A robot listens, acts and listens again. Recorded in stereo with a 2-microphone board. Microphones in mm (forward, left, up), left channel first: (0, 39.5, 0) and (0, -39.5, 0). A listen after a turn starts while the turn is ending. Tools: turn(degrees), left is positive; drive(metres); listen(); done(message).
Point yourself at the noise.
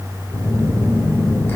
turn(degrees=30)
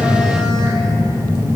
turn(degrees=120)
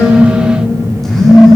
done("Facing the phone buzzing.")